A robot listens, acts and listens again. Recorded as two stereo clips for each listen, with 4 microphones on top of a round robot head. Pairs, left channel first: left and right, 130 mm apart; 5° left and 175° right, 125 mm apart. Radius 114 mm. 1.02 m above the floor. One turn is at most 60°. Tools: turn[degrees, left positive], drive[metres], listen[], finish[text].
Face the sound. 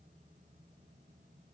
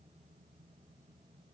Action: listen[]
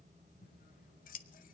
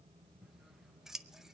Thought: The scissors: 100° left.
Action: turn[60]
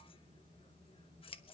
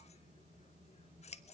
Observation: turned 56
Thought: The scissors is now 40° left.
Action: turn[40]
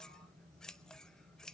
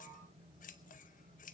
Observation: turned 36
Action: finish[Found it: scissors, straight ahead.]